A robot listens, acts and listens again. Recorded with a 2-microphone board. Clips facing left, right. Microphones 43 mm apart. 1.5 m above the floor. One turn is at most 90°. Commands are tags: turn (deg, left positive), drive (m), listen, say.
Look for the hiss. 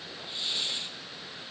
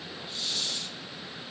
<turn deg="25"/>
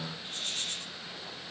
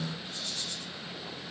<turn deg="90"/>
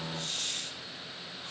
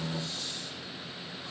<turn deg="65"/>
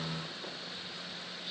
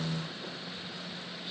<listen/>
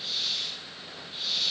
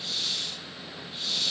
<say>Facing the hiss.</say>